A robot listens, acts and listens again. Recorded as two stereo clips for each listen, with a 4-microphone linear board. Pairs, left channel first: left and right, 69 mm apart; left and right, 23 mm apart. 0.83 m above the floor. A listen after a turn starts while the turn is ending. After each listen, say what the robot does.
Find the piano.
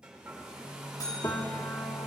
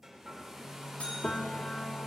Turn 45° left.
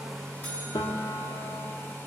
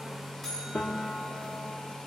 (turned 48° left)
Turn 85° left.
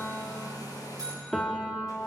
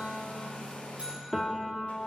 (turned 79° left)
Turn 10° left.
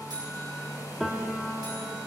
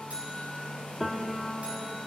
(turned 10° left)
Facing the piano, 1 to 2 m away.